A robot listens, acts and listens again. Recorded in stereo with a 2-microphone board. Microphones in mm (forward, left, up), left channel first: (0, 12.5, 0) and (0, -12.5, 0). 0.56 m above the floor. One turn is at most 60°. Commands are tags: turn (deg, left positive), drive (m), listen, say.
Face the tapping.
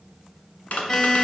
<turn deg="60"/>
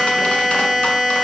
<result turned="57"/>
<listen/>
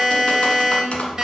<turn deg="50"/>
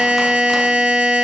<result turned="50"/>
<listen/>
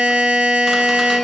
<listen/>
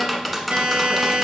<say>Found it: tapping, straight ahead, 1 to 2 m away.</say>